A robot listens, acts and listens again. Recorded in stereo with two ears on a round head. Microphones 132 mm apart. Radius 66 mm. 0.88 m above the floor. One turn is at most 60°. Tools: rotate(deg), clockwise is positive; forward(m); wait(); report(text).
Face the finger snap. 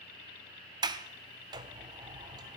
wait()
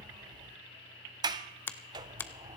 rotate(-30)
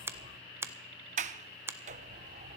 rotate(15)
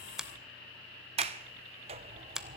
report("Found it: a finger snap, straight ahead, under 1 m away.")